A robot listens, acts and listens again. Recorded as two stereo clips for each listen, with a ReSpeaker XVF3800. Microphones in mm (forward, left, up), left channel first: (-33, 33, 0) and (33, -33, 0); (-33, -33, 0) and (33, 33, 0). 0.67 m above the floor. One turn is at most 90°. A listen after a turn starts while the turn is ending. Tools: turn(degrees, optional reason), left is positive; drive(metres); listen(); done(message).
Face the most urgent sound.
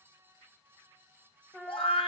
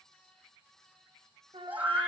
turn(degrees=90, reason="The scream: 120° left.")
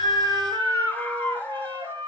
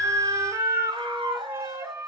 turn(degrees=60, reason="The scream is now 60° left.")
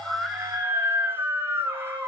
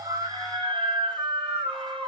turn(degrees=20, reason="The scream is now 20° left.")
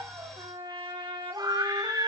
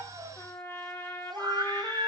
done("Facing the scream, 2 to 4 m away.")